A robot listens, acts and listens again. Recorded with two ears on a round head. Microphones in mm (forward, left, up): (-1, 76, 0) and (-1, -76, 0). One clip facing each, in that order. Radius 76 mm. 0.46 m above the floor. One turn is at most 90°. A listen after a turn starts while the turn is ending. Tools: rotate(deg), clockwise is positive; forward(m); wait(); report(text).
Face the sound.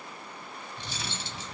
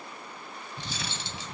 rotate(65)
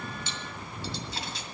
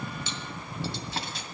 rotate(45)
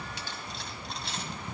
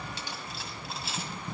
report("Found it: cutlery clinking, straight ahead, 1 to 2 m away.")